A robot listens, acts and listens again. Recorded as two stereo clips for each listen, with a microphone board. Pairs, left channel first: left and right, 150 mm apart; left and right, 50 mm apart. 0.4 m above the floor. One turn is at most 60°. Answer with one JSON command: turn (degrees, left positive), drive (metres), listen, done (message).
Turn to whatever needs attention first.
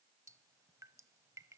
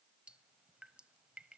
{"listen": true}
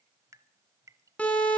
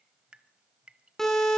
{"turn": 30}
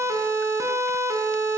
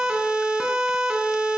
{"turn": -20}
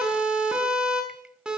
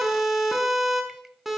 {"done": "Found it: a siren, straight ahead."}